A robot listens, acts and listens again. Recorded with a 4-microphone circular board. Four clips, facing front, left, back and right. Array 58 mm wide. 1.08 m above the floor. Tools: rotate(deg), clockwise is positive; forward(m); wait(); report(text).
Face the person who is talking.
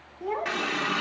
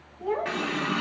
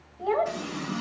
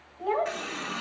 rotate(150)
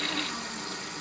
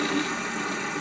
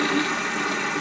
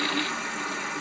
wait()
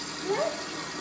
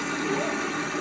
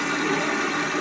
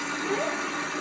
wait()
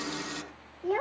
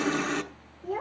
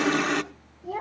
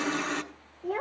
rotate(25)
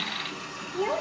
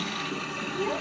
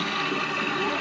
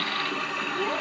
wait()
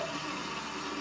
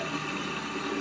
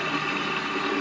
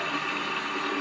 wait()
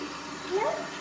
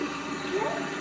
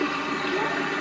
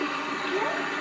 report("Facing where the child speaking came from. I can't hear it now.")